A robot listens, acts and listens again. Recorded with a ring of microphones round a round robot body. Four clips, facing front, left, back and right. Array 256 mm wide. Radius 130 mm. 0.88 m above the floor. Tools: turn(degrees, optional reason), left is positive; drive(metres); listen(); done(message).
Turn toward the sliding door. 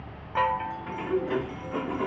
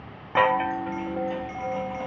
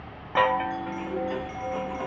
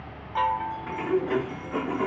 turn(degrees=-65, reason="The sliding door: 65° right.")
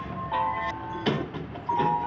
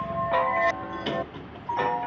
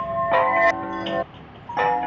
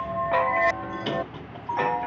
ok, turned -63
done("Found it: a sliding door, straight ahead.")